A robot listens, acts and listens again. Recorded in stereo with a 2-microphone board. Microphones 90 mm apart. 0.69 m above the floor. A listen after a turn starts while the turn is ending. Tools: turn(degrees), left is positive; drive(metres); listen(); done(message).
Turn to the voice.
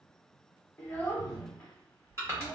turn(degrees=20)
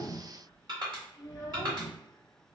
turn(degrees=140)
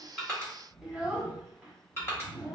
turn(degrees=-15)
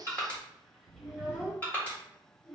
done("Facing the child speaking, 1 to 2 m away.")